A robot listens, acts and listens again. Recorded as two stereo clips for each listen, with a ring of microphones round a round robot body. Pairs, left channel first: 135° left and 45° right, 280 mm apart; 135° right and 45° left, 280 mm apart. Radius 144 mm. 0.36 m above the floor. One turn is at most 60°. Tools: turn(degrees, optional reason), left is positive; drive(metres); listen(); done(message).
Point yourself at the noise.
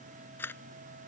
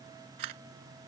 turn(degrees=50, reason="The camera shutter: 50° left.")
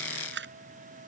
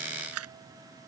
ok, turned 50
done("Facing the camera shutter.")